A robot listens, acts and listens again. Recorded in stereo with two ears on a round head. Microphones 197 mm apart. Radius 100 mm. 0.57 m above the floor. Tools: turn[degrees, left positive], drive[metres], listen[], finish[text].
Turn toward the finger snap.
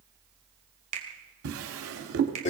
Thought: The finger snap: about 35° right or 145° right.
Action: turn[-35]
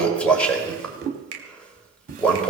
Thought: So it is at 110° right.
Action: turn[-110]
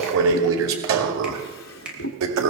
Action: finish[Facing the finger snap.]